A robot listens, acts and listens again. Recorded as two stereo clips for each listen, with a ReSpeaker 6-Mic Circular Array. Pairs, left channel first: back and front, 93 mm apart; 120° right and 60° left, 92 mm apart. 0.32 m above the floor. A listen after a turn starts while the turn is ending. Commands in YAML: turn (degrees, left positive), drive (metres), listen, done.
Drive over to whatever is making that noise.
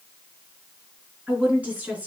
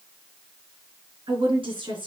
turn: 75
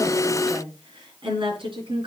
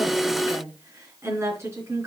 drive: 1.0
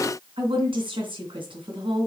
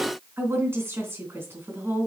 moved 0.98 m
drive: 1.0
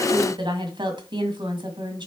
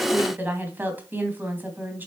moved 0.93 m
drive: 1.0
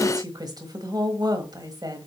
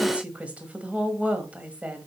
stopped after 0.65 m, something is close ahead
turn: -10
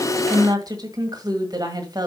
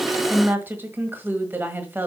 done: "I am next to the woman speaking."